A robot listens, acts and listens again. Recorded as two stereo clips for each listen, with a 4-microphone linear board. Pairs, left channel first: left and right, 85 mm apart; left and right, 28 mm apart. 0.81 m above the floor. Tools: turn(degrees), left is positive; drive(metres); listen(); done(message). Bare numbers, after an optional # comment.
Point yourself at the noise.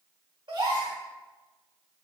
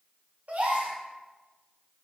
# The gasp: about 60° right or 120° right.
turn(-60)
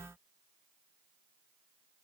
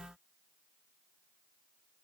listen()
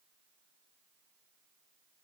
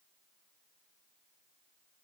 done("I heard a gasp, but can't make it out now. It was about straight ahead or 60° right.")